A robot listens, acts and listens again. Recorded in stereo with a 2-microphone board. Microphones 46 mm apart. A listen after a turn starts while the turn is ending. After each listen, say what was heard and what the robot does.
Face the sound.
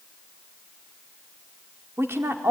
The woman speaking: about 65° right or 115° right. Turn 65° right.
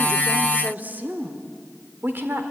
So it is at 50° right. Turn 50° right.
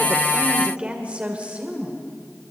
The woman speaking is now 30° right. Turn 30° right.
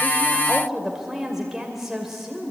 Facing the woman speaking.